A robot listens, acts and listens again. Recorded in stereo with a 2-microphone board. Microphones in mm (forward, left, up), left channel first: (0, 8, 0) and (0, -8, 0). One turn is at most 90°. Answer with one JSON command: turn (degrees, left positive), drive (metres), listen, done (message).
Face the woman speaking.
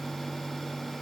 {"listen": true}
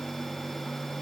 {"listen": true}
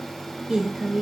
{"turn": -70}
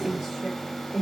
{"turn": -25}
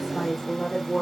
{"turn": 10}
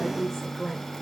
{"done": "Facing the woman speaking."}